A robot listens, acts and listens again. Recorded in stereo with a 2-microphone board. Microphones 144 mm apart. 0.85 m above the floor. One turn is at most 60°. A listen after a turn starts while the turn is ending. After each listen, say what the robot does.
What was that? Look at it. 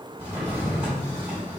Turn 20° right.
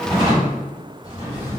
Turn 60° right.
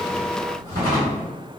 Turn 60° right.
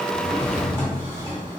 Turn 20° right.
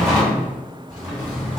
Facing the drawer.